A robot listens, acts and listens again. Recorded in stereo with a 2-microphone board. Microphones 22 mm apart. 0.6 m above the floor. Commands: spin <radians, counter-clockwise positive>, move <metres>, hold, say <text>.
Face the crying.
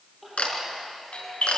spin -0.52
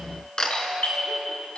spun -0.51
hold
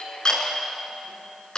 hold
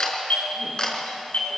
say I heard crying, but can't make it out now. It was about 25° left or 150° right.